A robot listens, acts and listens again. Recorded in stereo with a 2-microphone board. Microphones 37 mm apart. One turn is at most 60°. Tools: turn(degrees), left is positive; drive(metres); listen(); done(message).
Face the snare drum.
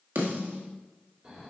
turn(degrees=-60)
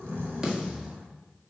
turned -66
turn(degrees=-20)
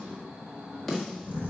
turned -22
done("Found it: a snare drum, straight ahead, 1 to 2 m away.")